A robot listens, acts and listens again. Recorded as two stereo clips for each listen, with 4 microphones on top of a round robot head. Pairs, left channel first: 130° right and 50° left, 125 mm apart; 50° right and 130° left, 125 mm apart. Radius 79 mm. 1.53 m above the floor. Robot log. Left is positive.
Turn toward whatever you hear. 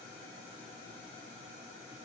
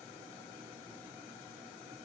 cmd idle
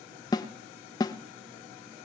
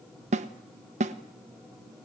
note: The snare drum: 165° left.
cmd yaw +165
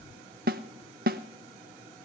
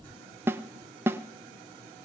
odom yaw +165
note: The snare drum is now 60° left.
cmd yaw +60
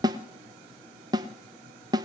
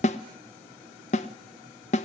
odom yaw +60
note: The snare drum is now 10° right.
cmd yaw -10
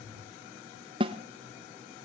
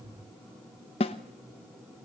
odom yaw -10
end: Facing the snare drum.